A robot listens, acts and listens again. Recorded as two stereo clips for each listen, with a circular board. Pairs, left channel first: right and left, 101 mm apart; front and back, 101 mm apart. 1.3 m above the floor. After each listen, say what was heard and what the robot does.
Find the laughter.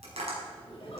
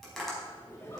The laughter: 60° right. Turn 60° right.
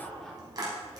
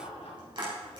Found it: laughter, straight ahead.